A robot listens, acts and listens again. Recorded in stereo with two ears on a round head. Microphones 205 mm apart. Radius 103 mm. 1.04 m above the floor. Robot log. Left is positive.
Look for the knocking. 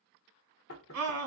note: The knocking: about 65° left or 115° left.
cmd yaw +65
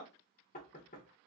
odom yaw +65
note: So it is at 40° left.
cmd yaw +40
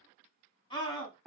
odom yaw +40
end: Found it: knocking, straight ahead.